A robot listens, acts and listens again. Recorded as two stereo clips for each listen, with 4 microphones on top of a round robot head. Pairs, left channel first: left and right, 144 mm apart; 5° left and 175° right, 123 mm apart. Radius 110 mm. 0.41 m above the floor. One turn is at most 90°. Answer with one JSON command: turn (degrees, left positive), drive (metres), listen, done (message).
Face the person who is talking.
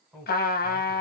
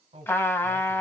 {"turn": 90}
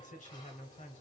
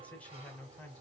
{"turn": 85}
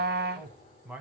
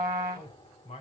{"turn": -10}
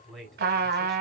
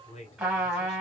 {"done": "Found it: a man speaking, straight ahead."}